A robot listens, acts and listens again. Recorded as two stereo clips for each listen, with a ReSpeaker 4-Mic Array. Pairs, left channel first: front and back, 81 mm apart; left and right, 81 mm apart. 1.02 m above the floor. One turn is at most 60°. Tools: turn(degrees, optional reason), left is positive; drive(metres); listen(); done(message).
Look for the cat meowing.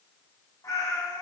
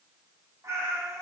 turn(degrees=-35, reason="The cat meowing: 35° right.")
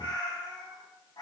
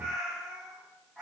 done("Facing the cat meowing, 2 to 4 m away.")